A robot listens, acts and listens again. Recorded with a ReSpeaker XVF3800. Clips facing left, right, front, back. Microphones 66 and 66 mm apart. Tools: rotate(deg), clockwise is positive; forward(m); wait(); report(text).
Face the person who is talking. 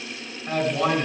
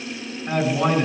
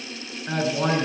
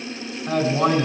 rotate(-175)
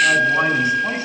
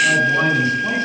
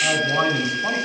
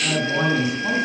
wait()
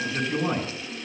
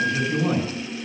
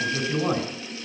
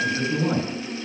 rotate(-10)
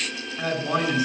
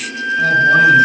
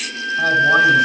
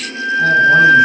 wait()
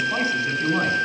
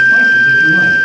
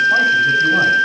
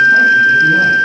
wait()
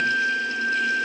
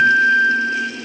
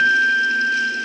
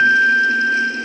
report("Facing where the man speaking came from. I can't hear it now.")